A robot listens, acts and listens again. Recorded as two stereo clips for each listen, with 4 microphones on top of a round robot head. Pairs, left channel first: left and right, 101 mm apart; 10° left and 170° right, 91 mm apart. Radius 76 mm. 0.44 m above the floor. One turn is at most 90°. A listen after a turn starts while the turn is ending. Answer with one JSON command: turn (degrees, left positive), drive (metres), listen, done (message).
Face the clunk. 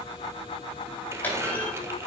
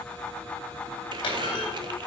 {"turn": 20}
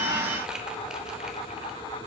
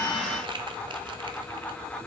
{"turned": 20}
{"done": "I heard a clunk from this way, but can't make it out now."}